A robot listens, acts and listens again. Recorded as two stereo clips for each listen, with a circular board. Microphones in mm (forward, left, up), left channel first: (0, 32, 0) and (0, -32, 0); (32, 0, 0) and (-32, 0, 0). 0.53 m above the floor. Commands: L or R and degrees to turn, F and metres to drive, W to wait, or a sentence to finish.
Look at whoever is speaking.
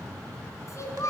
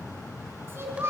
L130
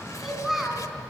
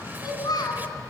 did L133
Found it: a child speaking, straight ahead, 2 to 4 m away.